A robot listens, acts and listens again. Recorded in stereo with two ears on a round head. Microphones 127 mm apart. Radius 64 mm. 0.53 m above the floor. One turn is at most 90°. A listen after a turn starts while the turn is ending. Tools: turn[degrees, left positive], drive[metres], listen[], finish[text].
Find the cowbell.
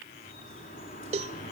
Thought: The cowbell: about 45° right or 135° right.
Action: turn[-45]
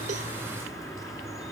Action: listen[]
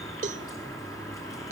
Thought: So it is at 70° right.
Action: turn[-70]
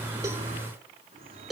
Action: finish[Facing the cowbell, 1 to 2 m away.]